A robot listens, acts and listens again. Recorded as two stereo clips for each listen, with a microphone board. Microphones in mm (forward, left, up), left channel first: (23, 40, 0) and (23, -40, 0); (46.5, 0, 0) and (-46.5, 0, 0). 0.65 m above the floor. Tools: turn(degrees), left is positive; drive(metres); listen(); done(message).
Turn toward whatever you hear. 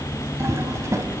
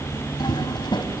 turn(degrees=-35)
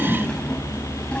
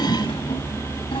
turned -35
turn(degrees=15)
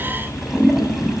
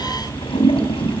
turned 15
done("Facing the toilet flushing.")